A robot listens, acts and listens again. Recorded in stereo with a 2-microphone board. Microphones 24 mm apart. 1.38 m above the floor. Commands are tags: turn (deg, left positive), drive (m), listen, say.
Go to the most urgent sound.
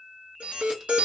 <turn deg="-55"/>
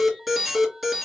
<drive m="1.0"/>
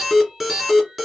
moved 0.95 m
<drive m="1.0"/>
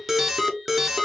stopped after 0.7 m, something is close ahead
<turn deg="-15"/>
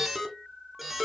<say>Arrived at the alarm, straight ahead.</say>